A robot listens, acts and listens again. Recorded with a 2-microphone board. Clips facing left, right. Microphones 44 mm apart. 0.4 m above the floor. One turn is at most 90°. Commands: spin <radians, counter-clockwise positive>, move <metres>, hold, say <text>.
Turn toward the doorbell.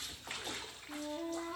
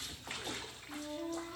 hold
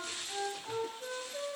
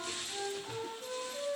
hold
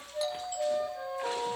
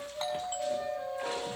spin -0.70
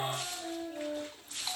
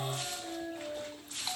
say Found it: a doorbell, straight ahead, over 4 m away.